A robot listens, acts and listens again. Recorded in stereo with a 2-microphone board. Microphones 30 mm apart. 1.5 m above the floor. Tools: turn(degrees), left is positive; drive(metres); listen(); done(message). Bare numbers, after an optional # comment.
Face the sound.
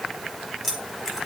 turn(-30)
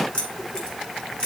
# So it is at 25° left.
turn(25)
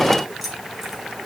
# The keys jangling is now 10° right.
turn(-10)
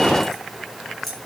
done("Found it: keys jangling, straight ahead.")